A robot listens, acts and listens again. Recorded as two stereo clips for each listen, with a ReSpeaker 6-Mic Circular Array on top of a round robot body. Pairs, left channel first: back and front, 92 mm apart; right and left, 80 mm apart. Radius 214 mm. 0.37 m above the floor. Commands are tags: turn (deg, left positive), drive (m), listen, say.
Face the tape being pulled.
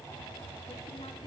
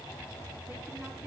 <listen/>
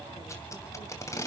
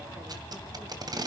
<turn deg="125"/>
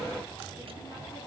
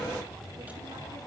<listen/>
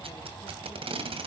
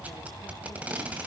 <turn deg="15"/>
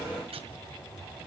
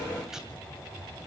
<listen/>
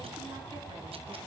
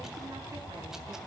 <listen/>
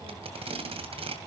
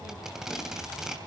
<say>Facing the tape being pulled, 2 to 4 m away.</say>